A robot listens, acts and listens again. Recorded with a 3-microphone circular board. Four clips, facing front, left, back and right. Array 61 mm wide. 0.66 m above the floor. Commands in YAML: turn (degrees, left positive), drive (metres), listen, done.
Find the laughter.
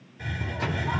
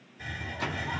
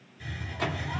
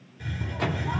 listen: true
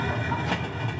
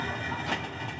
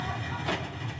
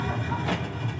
listen: true
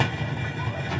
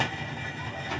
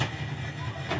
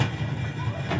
done: "I can't make out laughter, only a hiss."